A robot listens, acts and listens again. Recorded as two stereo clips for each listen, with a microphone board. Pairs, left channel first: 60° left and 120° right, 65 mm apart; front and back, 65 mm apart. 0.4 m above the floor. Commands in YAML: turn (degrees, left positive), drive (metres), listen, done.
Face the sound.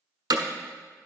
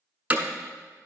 turn: -110
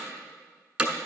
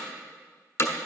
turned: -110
turn: -45
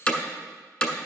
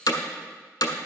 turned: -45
turn: -10
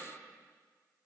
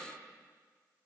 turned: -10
listen: true
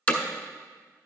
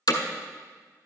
done: "Found it: hammering, straight ahead."